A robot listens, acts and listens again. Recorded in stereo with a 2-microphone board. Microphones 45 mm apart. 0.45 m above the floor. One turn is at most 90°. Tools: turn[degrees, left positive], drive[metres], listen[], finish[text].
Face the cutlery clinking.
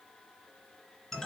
Action: listen[]
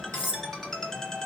Thought: The cutlery clinking: about 70° left or 110° left.
Action: turn[70]
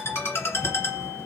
Action: listen[]
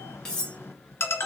Thought: So it is at 20° left.
Action: turn[20]
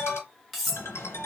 Action: finish[Facing the cutlery clinking, 1 to 2 m away.]